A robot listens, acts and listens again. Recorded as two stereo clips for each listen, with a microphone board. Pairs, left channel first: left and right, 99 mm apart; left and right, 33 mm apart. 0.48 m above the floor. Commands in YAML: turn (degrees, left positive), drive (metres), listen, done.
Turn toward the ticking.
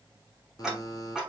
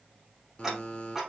turn: -30
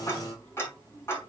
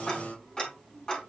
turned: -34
turn: 30
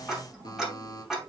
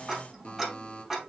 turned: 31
done: "Found it: ticking, straight ahead, over 4 m away."